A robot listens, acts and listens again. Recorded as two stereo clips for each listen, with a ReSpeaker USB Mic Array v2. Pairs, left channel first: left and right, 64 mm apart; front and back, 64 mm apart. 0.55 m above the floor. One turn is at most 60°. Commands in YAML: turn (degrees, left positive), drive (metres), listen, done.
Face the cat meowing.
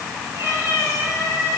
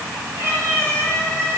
turn: -60
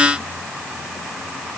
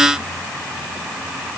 turn: -60
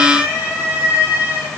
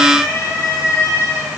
turn: -35
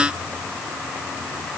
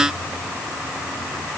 listen: true
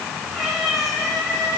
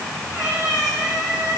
done: "Facing the cat meowing, over 4 m away."